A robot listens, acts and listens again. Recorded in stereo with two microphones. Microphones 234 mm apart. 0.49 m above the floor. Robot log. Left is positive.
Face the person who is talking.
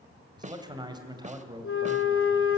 note: The man speaking: about 20° right or 160° right.
cmd yaw -20
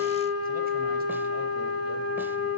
cmd idle
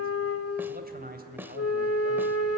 note: So it is at 140° right.
cmd yaw -140
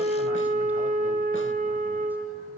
cmd idle
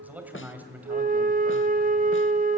end: Found it: a man speaking, straight ahead.